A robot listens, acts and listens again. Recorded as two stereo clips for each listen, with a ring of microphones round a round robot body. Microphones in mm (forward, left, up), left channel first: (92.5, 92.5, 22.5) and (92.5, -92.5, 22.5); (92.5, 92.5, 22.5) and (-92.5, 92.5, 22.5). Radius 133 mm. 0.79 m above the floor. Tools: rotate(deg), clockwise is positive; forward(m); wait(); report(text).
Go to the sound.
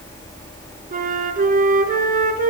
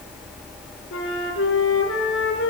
rotate(50)
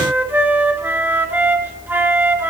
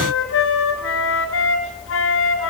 rotate(10)
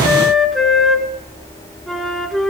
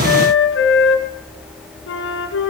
forward(1.0)
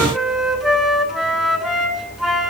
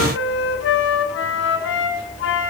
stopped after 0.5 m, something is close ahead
report("Blocked. The flute is further on, straight ahead.")